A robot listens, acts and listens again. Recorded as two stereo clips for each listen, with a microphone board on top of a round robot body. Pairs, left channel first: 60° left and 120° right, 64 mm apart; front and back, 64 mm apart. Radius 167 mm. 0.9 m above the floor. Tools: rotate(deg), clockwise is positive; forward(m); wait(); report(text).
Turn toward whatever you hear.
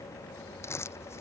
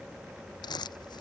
rotate(-10)
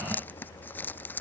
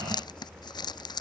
report("Facing the crumpling.")